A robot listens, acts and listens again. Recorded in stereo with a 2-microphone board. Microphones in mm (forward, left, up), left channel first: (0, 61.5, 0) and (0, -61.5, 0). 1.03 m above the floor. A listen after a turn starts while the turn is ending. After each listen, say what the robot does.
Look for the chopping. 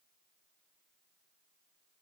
Keep listening.
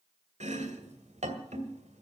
Turn 70° right.
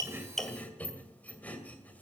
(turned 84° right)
Turn 10° left.
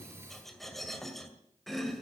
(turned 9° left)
Found it: chopping, straight ahead.